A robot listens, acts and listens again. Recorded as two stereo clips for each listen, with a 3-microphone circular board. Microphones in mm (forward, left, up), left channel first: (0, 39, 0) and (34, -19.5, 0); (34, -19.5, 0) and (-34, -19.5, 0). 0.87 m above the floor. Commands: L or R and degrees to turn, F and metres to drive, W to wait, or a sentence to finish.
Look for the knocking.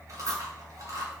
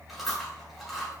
W
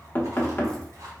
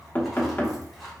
L60
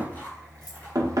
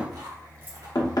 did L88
R25
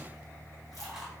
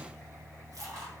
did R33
L10
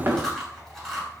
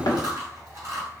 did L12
Found it: knocking, straight ahead, under 1 m away.